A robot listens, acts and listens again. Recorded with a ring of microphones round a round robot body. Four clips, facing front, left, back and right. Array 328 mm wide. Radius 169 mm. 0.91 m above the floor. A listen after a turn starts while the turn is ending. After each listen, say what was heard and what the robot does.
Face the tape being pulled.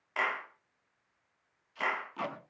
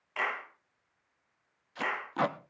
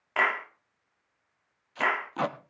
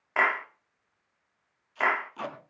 The tape being pulled: 130° left. Turn 130° left.
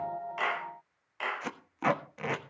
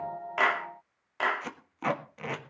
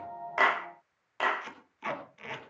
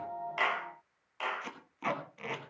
The tape being pulled is now 25° left. Turn 25° left.
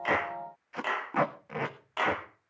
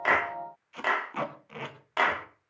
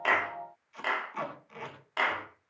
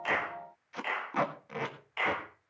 The tape being pulled is now 15° right. Turn 15° right.
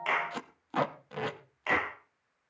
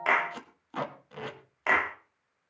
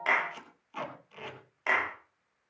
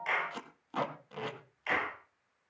Facing the tape being pulled.